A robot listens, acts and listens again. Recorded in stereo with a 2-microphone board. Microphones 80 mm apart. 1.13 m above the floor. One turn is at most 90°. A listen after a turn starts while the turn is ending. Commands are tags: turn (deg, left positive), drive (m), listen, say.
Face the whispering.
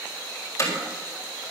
<listen/>
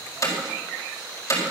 <listen/>
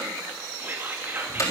<turn deg="-25"/>
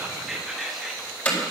<say>Found it: whispering, straight ahead.</say>